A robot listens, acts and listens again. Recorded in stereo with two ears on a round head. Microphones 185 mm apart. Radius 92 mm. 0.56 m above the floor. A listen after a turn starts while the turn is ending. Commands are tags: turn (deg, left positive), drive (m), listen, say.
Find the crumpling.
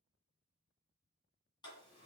<listen/>
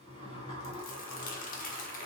<turn deg="40"/>
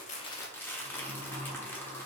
<turn deg="10"/>
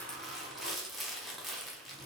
<say>Found it: crumpling, straight ahead, under 1 m away.</say>